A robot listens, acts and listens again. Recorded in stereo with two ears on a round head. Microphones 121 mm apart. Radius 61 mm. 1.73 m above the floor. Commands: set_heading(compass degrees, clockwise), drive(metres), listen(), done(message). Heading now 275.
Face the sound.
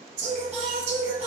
set_heading(325)
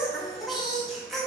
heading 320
done("Facing the singing, 1 to 2 m away.")